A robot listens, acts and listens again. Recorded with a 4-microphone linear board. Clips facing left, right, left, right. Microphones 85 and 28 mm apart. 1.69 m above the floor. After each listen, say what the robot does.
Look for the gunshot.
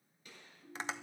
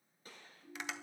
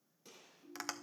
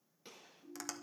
Turn 40° right.
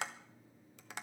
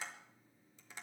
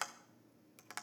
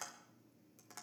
Keep listening.
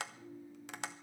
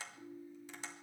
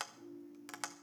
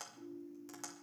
I heard a gunshot, but can't make it out now. It was about straight ahead or 100° right.